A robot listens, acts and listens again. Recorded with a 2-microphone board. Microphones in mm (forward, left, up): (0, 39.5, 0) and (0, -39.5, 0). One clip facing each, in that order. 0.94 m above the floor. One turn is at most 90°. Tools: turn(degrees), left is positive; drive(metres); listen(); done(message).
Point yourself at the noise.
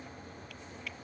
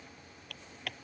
turn(degrees=-60)
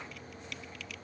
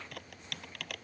turn(degrees=-60)
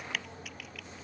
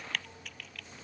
done("Facing the typing on a keyboard.")